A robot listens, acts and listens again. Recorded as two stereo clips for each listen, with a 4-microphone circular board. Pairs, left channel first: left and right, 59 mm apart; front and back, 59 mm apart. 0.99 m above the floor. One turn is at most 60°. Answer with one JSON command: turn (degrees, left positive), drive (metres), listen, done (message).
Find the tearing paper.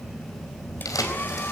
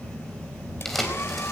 {"turn": 60}
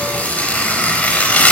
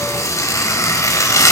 {"turn": 25}
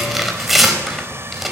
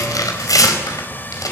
{"done": "Found it: tearing paper, straight ahead, over 4 m away."}